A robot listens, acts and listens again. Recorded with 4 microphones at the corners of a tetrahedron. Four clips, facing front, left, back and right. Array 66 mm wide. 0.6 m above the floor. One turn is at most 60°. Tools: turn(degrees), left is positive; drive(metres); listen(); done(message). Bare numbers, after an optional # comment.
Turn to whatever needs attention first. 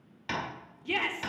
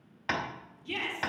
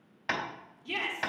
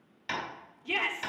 # The shout: 45° right.
turn(-45)
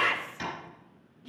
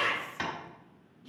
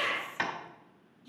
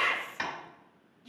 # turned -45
done("Found it: a shout, straight ahead, 1 to 2 m away.")